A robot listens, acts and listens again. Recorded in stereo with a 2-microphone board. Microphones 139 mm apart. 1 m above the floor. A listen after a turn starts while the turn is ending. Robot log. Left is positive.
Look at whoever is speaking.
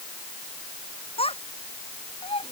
note: The child speaking: about 45° left or 135° left.
cmd yaw +45
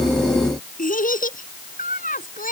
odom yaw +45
note: So it is at 90° left.
cmd yaw +90
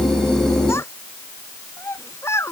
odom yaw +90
note: The child speaking is now 20° left.
cmd yaw +20
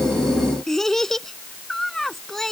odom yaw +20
end: Facing the child speaking.